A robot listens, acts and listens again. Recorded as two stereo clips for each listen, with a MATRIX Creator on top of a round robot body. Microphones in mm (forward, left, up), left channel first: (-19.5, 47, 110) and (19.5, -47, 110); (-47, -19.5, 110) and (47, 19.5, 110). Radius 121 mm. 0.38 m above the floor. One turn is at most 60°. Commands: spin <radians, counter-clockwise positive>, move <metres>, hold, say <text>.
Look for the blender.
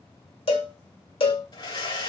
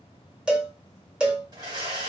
spin 1.05
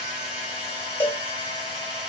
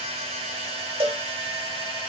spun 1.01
spin 0.17
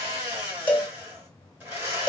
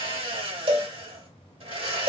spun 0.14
say Facing the blender.